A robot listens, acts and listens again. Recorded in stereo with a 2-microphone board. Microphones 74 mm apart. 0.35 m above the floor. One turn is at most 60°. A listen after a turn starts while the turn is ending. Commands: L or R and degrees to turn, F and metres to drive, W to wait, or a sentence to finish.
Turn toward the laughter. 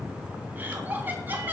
R25
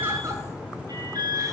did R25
W
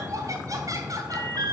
R60
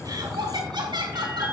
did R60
R60
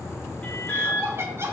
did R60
R35
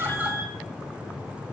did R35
W
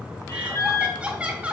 R15
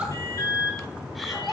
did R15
Facing the laughter.